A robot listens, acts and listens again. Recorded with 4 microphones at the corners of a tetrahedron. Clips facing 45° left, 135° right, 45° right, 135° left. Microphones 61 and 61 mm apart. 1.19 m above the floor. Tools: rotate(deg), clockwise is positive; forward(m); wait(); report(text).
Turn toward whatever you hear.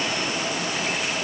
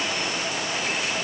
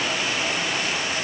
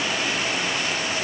wait()
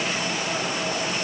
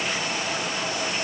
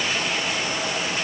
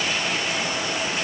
wait()
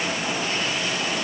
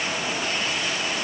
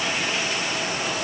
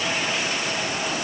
report("I can't make out anything to turn to.")